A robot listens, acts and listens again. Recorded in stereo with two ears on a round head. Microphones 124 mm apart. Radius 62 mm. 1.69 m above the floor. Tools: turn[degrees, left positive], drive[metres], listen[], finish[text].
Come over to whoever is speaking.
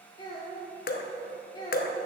Thought: The child speaking: about 35° left or 145° left.
Action: turn[35]
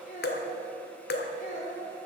Thought: So it is at 110° left.
Action: turn[110]
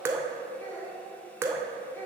Thought: The child speaking is now 15° left.
Action: turn[15]
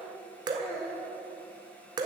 Action: drive[1.0]
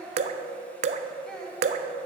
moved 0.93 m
Action: drive[1.0]
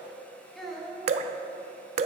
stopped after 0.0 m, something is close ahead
Action: finish[I am next to the child speaking.]